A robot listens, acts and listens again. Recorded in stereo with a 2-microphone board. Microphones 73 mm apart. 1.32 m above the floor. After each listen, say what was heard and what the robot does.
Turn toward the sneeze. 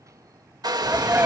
The sneeze: about 20° right or 160° right. Turn 20° right.
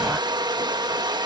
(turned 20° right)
Keep listening.
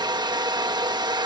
I heard a sneeze, but can't make it out now. It was about straight ahead or 140° right.